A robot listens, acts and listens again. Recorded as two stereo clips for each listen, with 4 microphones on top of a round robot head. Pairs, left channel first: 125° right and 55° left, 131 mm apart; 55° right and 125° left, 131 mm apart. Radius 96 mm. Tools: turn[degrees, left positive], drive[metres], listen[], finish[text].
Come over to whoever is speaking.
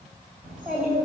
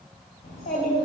Thought: The child speaking: 25° right.
Action: turn[-25]
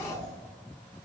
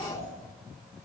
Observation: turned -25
Action: drive[1.0]
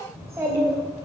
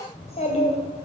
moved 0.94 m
Thought: The child speaking is now 15° right.
Action: turn[-15]
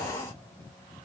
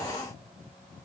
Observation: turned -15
Action: listen[]
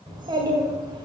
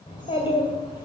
Action: drive[1.0]
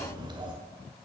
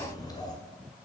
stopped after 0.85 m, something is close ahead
Action: finish[Arrived at the child speaking, straight ahead.]